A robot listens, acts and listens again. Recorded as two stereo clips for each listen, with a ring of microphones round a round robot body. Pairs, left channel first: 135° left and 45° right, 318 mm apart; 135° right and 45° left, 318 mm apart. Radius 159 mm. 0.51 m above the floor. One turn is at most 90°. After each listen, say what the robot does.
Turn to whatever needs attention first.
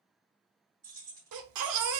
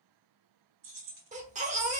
Turn 20° right.
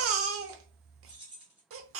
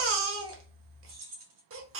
Facing the baby crying.